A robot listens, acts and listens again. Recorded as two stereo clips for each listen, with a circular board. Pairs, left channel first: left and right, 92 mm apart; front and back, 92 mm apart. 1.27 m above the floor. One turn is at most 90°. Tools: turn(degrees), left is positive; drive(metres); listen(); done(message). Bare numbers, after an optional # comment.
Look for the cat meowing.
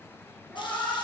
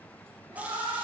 # The cat meowing: 165° left.
turn(90)
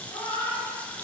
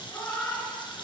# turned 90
# The cat meowing is now 60° left.
turn(60)
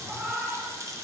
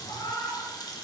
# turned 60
# The cat meowing is now 15° right.
turn(-15)
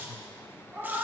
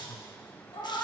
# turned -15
# The cat meowing is now 20° right.
turn(-20)
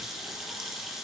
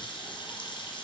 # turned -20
listen()
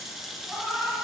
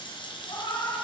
done("Facing the cat meowing, 2 to 4 m away.")